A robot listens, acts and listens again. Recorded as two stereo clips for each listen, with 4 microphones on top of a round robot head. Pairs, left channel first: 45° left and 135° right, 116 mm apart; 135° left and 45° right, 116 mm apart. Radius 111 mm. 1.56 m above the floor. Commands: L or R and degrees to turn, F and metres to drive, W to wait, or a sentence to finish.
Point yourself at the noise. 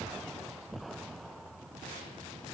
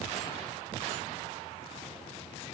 W
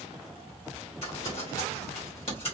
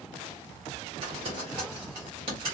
Found it: crumpling, straight ahead, 1 to 2 m away.